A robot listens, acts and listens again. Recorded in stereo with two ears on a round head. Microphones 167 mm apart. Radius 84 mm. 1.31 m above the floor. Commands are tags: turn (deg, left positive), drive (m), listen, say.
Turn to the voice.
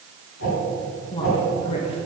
<turn deg="30"/>
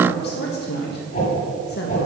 <turn deg="120"/>
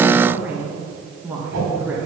<turn deg="-10"/>
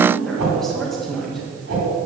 <say>Facing the woman speaking.</say>